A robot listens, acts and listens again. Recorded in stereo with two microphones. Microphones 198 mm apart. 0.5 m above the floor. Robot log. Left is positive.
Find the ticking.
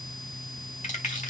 cmd idle
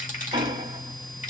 note: The ticking: about 25° right or 155° right.
cmd yaw -25
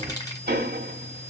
note: So it is at 125° right.
cmd yaw -125
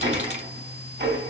note: The ticking is now 60° right.
cmd yaw -60
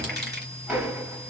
end: Facing the ticking, 1 to 2 m away.